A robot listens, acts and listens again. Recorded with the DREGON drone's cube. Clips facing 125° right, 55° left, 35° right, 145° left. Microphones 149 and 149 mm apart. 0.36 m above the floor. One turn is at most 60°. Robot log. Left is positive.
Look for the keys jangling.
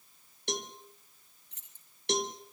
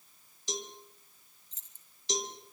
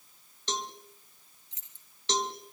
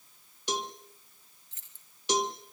note: The keys jangling: 105° right.
cmd yaw -60
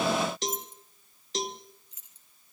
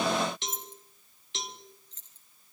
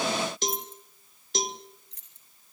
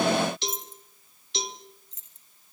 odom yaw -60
note: The keys jangling is now 45° right.
cmd yaw -45
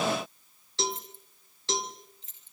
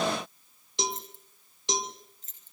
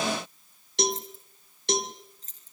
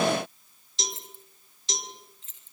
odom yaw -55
note: The keys jangling is now 15° left.
cmd yaw +15
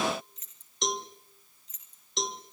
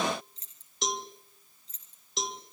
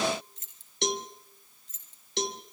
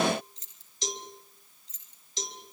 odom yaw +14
end: Facing the keys jangling, over 4 m away.